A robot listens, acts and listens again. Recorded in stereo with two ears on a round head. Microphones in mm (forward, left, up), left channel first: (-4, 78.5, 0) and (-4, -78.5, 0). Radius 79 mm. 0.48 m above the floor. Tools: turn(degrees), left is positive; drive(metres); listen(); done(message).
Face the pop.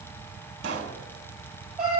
turn(degrees=-60)
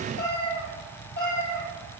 listen()
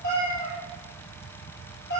done("I heard a pop, but can't make it out now. It was about straight ahead or 60° right.")